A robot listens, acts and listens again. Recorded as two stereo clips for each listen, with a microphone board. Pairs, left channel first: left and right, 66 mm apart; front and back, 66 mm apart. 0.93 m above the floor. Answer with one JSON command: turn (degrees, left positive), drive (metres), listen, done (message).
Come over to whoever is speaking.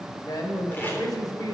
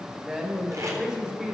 {"turn": 105}
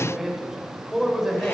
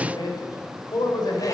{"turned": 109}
{"drive": 1.0}
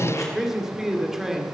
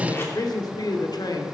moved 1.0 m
{"drive": 1.0}
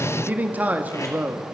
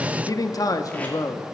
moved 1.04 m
{"turn": -25}
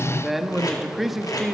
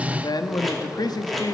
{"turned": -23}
{"drive": 1.0}
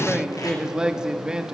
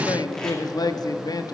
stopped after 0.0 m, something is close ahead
{"turn": -10}
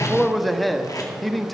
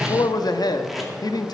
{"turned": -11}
{"done": "Arrived at the man speaking, straight ahead."}